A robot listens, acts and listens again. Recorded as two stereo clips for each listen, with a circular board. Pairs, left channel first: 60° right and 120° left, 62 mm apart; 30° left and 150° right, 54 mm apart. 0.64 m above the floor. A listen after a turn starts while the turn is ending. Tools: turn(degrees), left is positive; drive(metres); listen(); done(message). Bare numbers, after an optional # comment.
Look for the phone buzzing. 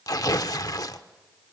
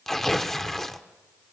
listen()
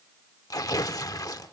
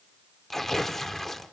listen()
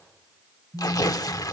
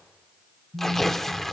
# The phone buzzing: 165° left.
turn(165)
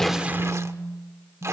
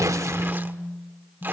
# The phone buzzing is now 20° left.
turn(20)
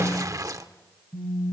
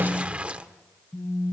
done("Found it: a phone buzzing, straight ahead.")